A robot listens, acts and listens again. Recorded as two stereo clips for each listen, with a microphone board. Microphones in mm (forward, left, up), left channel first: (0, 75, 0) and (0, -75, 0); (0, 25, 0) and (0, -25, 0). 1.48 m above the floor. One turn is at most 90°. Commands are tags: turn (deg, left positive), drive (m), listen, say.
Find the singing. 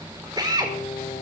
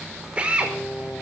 <turn deg="45"/>
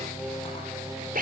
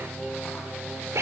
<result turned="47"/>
<say>Found it: singing, straight ahead.</say>